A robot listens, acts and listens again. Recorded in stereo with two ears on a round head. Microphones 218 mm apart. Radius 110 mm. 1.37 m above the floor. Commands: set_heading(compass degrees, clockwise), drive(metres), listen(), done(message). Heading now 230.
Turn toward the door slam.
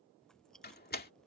set_heading(190)
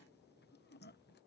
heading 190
listen()
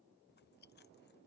done("I heard a door slam, but can't make it out now. It was about straight ahead or 100° left.")